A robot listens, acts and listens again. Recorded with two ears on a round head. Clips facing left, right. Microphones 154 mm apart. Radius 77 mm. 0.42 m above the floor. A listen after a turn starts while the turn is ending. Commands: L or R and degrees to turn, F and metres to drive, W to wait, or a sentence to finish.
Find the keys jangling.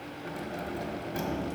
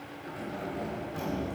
L75
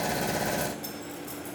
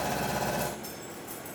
L40
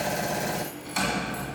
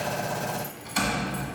Found it: keys jangling, straight ahead, 2 to 4 m away.